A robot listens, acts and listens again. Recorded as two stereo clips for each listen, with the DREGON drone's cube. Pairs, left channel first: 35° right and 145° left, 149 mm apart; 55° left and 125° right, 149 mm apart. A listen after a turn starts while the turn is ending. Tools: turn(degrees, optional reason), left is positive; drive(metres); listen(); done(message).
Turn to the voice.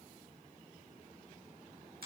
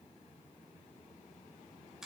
listen()
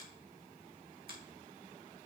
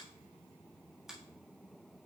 listen()
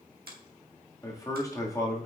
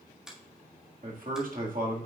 turn(degrees=-100, reason="The man speaking: 100° right.")
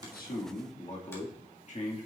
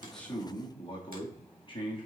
done("Facing the man speaking, 1 to 2 m away.")